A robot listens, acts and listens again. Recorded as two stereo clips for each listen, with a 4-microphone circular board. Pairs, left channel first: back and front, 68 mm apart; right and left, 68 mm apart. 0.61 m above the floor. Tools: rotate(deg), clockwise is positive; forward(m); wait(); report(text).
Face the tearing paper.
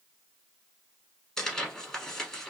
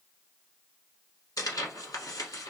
rotate(95)
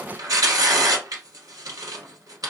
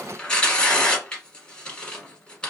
rotate(15)
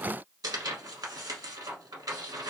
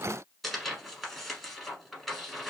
report("Found it: tearing paper, straight ahead.")